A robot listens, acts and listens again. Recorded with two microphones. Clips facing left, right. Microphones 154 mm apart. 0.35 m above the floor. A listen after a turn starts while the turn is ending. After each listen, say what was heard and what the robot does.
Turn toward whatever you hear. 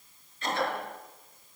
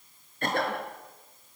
The cough: about 55° right or 125° right. Turn 55° right.
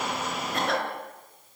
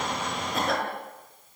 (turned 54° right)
Facing the cough.